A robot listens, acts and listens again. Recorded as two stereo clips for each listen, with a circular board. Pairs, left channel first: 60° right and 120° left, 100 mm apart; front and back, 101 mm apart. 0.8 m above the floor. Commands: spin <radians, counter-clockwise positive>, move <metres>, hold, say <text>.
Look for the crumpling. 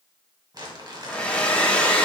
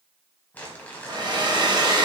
spin 1.31
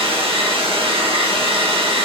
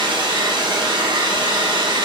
hold
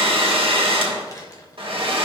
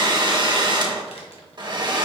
say Found it: crumpling, straight ahead, 1 to 2 m away.